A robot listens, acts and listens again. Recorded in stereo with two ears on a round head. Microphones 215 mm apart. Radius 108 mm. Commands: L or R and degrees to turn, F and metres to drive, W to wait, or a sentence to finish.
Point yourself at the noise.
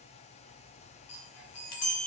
L70
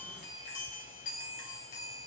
L35
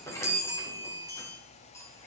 L15
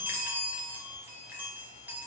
R10
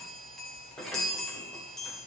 Found it: a chime, straight ahead.